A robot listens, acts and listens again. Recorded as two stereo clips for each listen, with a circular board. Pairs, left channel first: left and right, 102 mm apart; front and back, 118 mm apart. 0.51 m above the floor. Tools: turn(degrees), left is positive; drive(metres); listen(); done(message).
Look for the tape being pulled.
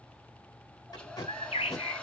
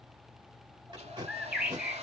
turn(degrees=135)
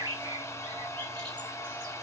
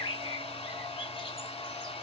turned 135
listen()
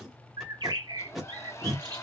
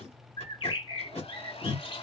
done("Facing the tape being pulled, 2 to 4 m away.")